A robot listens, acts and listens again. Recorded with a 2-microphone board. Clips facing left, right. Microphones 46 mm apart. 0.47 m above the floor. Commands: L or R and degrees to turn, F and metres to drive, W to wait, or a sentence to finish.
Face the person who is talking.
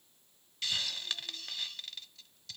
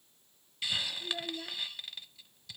R70
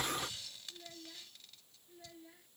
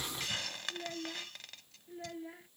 R40
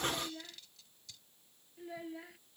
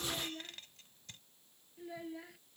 Facing the child speaking.